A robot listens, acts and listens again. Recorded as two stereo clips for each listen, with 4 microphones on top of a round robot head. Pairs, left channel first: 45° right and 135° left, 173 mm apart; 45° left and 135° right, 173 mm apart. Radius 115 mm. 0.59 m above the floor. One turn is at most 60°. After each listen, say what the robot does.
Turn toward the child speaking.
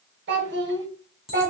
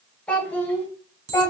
Turn 60° left.
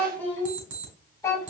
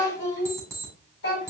Turn 25° left.
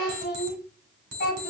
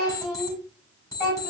Turn 15° right.
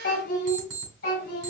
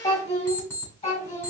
Turn 10° right.
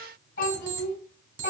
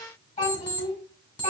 Facing the child speaking.